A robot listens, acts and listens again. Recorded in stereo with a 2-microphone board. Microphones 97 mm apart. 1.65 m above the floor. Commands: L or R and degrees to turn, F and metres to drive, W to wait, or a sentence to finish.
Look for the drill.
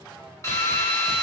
L35
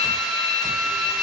Found it: a drill, straight ahead.